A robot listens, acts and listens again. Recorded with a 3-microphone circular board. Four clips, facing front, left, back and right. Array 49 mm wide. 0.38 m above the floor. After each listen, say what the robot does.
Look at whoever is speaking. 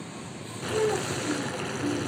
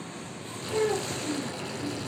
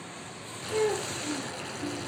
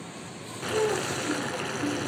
Turn 155° left.
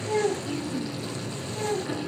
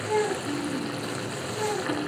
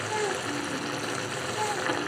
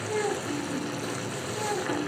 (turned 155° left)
Facing the child speaking, 2 to 4 m away.